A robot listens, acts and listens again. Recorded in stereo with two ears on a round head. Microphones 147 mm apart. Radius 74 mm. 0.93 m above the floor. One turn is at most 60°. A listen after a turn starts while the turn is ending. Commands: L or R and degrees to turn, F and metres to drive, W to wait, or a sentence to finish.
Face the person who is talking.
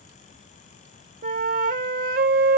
W
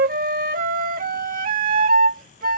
W
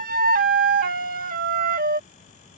I can't make out anyone speaking, only a flute.